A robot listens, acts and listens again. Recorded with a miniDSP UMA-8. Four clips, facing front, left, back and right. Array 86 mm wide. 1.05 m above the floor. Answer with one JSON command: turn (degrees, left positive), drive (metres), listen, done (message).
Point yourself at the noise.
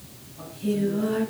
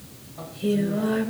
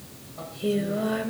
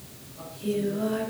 {"turn": 145}
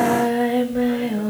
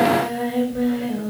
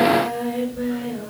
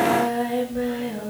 {"turn": 10}
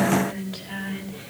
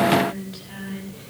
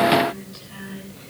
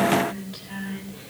{"done": "Found it: singing, straight ahead."}